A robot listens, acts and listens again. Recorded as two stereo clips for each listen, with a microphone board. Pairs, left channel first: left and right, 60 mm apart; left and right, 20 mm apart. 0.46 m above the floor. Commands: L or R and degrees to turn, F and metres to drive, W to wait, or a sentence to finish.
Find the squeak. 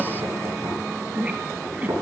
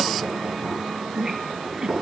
R25
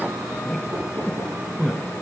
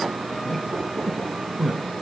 Found it: a squeak, straight ahead, 1 to 2 m away.